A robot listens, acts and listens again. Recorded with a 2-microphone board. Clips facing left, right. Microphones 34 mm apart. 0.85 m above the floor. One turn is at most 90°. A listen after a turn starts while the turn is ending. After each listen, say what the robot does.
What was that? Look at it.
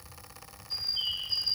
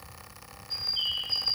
Turn 25° right.
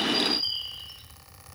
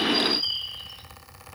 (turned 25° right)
Turn 90° right.
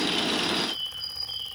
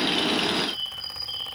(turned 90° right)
Turn 65° right.
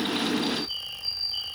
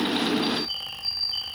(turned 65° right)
Turn 35° right.
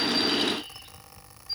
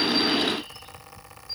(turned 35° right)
Keep listening.
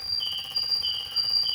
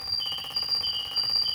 Turn 10° left.
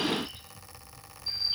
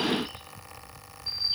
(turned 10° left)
Facing the bird.